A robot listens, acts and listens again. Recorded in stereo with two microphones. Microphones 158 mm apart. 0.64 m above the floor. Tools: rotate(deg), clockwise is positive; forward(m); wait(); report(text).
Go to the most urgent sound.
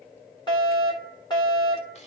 rotate(-30)
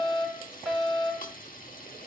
forward(1.0)
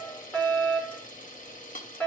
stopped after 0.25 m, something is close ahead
rotate(-10)
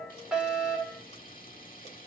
report("Something is in my way. I am facing the fire alarm but have not reached it.")